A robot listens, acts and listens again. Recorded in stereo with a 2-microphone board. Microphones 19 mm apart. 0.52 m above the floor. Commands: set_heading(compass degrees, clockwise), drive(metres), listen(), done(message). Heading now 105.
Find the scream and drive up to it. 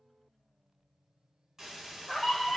set_heading(75)
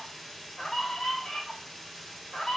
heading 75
set_heading(295)
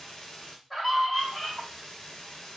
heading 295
drive(1.0)
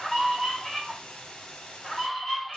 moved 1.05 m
drive(1.0)
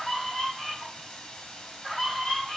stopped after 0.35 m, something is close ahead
set_heading(280)
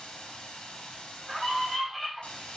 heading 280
done("Arrived at the scream, straight ahead.")